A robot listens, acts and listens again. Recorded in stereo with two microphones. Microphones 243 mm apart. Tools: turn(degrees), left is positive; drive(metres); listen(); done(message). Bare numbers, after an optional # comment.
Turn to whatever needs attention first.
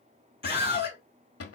# The scream: about 25° right or 155° right.
turn(-25)
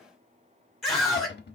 done("Found it: a scream, straight ahead.")